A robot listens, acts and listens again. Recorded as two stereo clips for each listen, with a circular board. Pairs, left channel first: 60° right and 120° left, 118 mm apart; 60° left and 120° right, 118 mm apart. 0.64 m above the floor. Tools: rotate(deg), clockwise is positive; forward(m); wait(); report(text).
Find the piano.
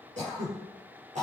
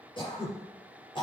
wait()
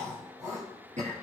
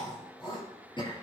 wait()
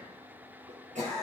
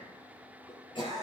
report("I can't make out a piano, only throat clearing.")